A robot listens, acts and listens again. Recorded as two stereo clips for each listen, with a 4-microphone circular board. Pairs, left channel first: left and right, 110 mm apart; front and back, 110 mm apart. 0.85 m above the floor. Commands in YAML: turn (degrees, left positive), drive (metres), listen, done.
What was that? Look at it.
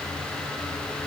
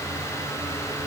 listen: true
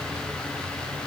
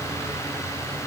listen: true
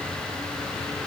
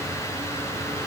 done: "I can't make out anything to turn to."